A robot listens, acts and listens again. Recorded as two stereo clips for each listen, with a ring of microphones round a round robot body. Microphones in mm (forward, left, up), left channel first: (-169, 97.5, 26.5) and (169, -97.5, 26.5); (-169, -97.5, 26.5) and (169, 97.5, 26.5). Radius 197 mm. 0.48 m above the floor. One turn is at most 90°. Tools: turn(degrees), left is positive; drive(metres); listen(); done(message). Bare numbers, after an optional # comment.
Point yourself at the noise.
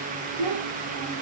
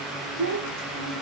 # The child speaking: 35° right.
turn(-35)
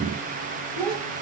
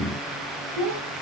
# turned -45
# The child speaking is now 10° left.
turn(10)
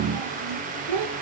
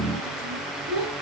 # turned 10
done("Facing the child speaking, 2 to 4 m away.")